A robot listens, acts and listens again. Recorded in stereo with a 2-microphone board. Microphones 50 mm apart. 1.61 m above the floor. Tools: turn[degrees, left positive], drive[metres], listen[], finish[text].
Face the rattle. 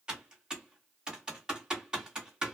Action: listen[]
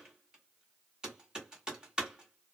Action: listen[]
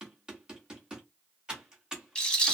Thought: The rattle: about 15° left or 165° left.
Action: turn[15]
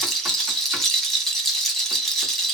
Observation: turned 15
Action: finish[Found it: a rattle, straight ahead, 1 to 2 m away.]